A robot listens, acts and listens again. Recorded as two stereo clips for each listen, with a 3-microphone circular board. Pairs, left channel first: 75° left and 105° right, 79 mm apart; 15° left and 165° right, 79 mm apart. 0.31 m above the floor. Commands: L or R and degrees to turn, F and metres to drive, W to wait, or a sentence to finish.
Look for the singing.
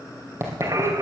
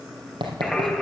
R75
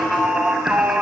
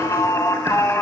R30
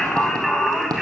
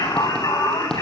R15
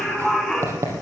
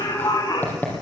R10
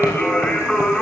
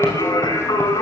Found it: singing, straight ahead.